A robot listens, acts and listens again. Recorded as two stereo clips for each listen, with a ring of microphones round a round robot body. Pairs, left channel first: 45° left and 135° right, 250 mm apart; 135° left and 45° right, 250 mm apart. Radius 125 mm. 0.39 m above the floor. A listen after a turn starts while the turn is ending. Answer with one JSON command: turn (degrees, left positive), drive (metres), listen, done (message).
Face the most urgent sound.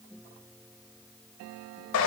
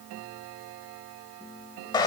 {"listen": true}
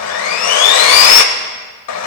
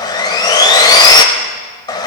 {"listen": true}
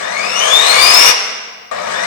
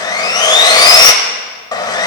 {"done": "I can't make out anything urgent, only sawing."}